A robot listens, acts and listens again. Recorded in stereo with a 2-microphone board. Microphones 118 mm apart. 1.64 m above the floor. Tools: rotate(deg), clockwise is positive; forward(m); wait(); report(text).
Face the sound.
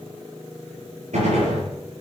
rotate(90)
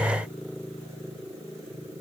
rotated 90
report("I heard a gunshot from this way, but can't make it out now.")